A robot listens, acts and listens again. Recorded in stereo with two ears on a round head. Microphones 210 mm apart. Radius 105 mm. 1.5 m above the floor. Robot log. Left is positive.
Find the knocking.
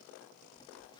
cmd idle
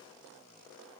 cmd idle
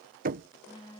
note: The knocking: about 35° right or 145° right.
cmd yaw -35
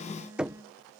end: Found it: knocking, straight ahead.